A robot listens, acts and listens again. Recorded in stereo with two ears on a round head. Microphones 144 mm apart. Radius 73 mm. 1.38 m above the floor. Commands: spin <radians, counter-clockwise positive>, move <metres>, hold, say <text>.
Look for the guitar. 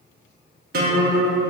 spin -1.05
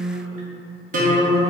spin -0.87
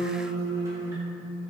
spin -0.35
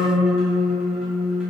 say Found it: a guitar, straight ahead.